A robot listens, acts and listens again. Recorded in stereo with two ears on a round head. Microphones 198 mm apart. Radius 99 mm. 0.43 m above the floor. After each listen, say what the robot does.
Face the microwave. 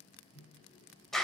Turn 90° left.
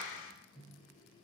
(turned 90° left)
Found it: a microwave, straight ahead, over 4 m away.